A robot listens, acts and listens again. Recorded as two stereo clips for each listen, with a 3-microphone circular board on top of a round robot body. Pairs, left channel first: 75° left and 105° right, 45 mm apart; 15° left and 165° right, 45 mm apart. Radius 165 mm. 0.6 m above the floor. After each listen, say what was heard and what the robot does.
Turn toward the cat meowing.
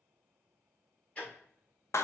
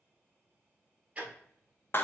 Keep listening.
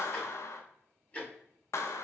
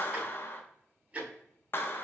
Keep listening.
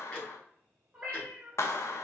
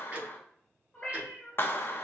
The cat meowing: 35° right. Turn 35° right.
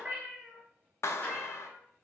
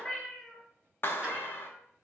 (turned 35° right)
The cat meowing is now 30° right. Turn 30° right.
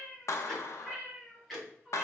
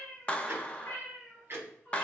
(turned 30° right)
Facing the cat meowing.